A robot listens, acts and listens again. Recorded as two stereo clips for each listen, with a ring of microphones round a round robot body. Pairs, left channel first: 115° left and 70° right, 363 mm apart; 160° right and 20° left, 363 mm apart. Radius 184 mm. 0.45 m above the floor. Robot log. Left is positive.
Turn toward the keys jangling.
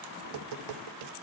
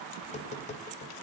cmd idle
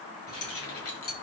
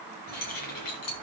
note: The keys jangling: 165° left.
cmd yaw +165
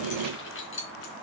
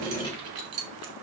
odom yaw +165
note: The keys jangling is now 55° left.
cmd yaw +55
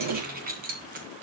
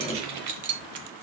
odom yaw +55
end: Facing the keys jangling, 2 to 4 m away.